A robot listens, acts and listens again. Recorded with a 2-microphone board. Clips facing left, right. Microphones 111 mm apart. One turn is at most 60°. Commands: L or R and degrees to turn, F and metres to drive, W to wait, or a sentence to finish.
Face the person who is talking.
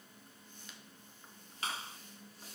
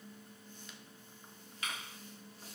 W
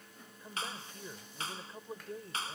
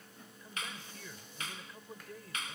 L30
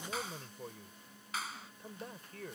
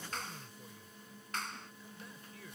L60
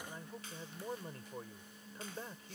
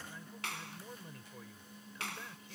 L40
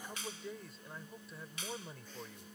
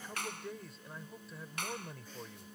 Found it: a man speaking, straight ahead.